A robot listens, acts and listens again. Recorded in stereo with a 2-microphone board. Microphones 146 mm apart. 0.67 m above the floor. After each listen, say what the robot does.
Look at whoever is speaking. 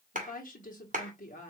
Turn 60° left.
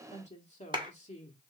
Turn 55° left.
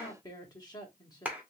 Turn 25° left.
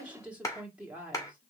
Turn 10° right.
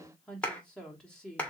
Found it: a woman speaking, straight ahead.